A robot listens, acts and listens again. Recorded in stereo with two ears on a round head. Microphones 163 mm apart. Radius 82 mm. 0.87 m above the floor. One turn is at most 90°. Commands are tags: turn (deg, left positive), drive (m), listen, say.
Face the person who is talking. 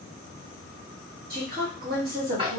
<turn deg="-55"/>
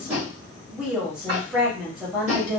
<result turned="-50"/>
<turn deg="-10"/>
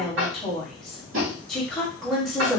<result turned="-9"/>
<say>Facing the woman speaking.</say>